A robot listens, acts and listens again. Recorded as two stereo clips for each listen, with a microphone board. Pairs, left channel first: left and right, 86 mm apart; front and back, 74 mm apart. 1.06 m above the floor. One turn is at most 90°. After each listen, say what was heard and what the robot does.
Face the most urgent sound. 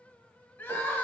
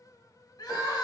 The crying: 25° left. Turn 25° left.
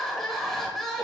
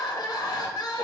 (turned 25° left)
Found it: crying, straight ahead.